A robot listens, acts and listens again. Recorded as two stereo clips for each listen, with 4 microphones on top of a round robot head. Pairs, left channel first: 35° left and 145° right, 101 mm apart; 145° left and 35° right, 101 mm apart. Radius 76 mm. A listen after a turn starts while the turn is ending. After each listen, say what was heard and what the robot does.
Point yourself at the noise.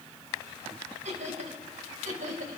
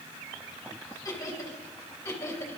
The laughter: 150° right. Turn 150° right.
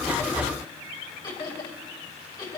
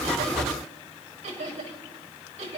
The laughter is now 15° right. Turn 15° right.
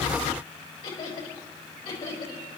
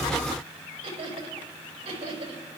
Facing the laughter, over 4 m away.